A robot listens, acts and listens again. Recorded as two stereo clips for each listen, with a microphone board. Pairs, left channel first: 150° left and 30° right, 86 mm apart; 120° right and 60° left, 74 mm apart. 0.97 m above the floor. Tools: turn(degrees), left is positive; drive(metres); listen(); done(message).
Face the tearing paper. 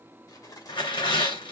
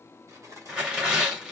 turn(degrees=140)
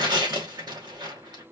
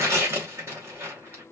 done("Facing the tearing paper.")